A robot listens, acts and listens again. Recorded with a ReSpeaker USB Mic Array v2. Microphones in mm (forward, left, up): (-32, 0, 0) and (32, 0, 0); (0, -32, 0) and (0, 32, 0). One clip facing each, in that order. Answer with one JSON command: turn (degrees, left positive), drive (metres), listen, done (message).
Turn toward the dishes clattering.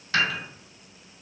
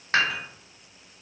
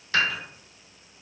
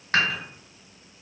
{"turn": 45}
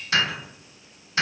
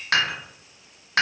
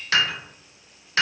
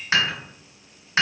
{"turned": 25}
{"turn": 25}
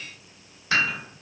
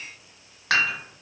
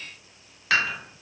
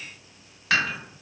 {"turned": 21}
{"done": "Facing the dishes clattering, 1 to 2 m away."}